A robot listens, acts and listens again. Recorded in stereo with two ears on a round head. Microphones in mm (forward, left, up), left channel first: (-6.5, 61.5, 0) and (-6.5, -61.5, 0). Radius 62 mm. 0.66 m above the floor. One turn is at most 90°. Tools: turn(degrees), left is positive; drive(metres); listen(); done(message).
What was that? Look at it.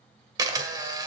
turn(degrees=-30)
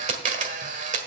turn(degrees=-90)
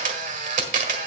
turn(degrees=-55)
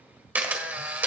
turn(degrees=-10)
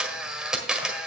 done("Found it: a camera shutter, straight ahead, 1 to 2 m away.")